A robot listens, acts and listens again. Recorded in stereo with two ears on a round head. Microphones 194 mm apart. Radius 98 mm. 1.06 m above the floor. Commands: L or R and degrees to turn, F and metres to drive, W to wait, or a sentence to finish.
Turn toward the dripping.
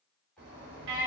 W
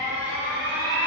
W
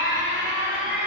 I can't make out dripping to turn to.